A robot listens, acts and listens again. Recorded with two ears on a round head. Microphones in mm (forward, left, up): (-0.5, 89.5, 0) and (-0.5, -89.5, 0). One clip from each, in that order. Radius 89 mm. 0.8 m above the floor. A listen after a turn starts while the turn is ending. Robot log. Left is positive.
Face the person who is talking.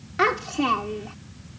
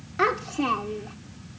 cmd yaw +30
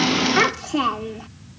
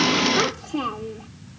note: So it is at 140° left.
cmd yaw +140
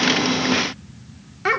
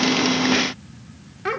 note: The child speaking is now 35° left.
cmd yaw +35
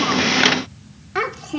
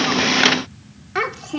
end: Facing the child speaking.